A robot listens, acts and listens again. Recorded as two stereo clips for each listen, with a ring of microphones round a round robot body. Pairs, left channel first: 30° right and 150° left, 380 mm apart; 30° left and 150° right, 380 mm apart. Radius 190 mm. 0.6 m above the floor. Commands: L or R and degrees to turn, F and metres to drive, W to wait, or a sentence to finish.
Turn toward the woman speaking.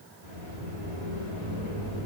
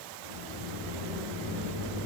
W
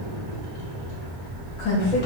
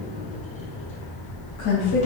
R10
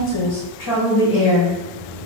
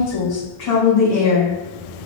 Found it: a woman speaking, straight ahead.